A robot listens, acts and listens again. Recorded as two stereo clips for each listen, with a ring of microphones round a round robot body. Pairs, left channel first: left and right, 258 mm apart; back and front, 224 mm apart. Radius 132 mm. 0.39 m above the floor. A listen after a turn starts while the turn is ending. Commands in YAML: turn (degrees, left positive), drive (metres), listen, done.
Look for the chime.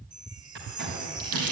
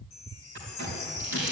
turn: -160
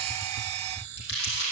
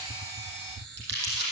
turn: -40
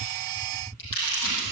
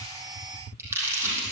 listen: true
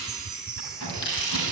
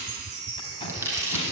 done: "Facing the chime."